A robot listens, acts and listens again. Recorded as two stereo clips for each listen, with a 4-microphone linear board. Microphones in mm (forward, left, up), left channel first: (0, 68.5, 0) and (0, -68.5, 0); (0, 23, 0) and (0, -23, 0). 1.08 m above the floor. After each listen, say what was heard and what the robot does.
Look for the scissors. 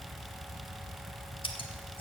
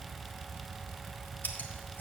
The scissors: about 40° left or 140° left. Turn 40° left.
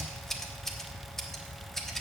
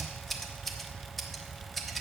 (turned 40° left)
Found it: scissors, straight ahead, 1 to 2 m away.